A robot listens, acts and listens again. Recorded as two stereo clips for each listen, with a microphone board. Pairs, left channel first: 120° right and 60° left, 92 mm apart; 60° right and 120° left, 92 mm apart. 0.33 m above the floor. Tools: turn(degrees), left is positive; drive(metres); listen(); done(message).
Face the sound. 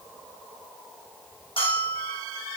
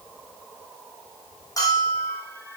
turn(degrees=-110)
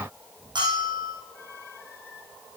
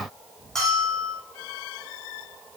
turn(degrees=25)
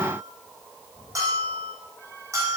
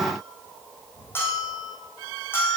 done("Found it: a bell, straight ahead, over 4 m away.")